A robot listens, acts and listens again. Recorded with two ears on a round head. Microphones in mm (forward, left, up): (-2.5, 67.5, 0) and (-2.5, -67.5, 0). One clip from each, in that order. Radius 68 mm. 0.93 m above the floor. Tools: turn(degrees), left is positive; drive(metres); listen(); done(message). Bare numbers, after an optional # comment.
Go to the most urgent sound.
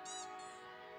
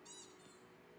listen()
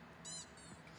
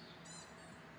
listen()
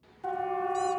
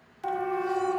# The siren: about 60° right or 120° right.
turn(-60)
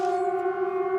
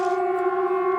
# So it is at 55° right.
turn(-55)
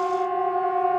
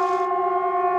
# The siren is now 10° right.
turn(-10)
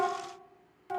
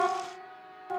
drive(1.0)
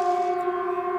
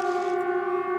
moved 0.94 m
# The siren is now 10° left.
turn(10)
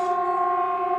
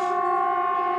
drive(1.0)
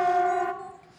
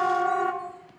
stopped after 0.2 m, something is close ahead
done("I am next to the siren.")